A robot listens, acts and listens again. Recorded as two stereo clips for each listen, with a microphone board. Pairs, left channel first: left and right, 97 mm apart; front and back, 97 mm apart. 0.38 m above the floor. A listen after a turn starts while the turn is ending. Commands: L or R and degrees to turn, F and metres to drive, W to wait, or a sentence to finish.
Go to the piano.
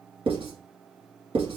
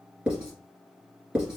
W
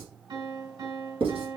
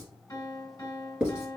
R55
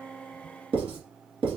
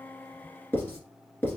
W
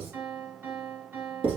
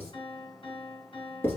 R20
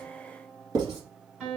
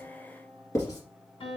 F1.0
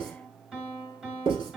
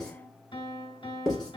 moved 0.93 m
R10
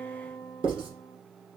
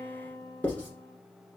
F1.0
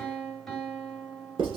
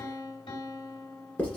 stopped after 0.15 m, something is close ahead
I am next to the piano.